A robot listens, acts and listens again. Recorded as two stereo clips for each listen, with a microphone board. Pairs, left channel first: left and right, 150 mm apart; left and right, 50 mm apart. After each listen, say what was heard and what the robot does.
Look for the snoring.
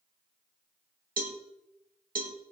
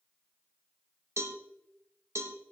Keep listening.
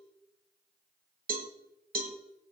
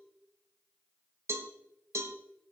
Keep listening.
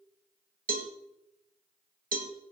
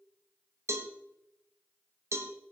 I can't make out snoring to turn to.